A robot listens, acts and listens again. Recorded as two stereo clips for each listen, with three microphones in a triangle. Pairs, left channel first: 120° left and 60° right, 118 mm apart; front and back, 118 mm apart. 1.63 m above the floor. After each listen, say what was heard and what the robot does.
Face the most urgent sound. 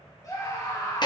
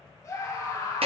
The scream: 60° left. Turn 60° left.
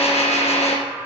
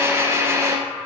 The scream is now 10° left. Turn 10° left.
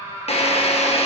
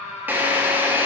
Facing the scream.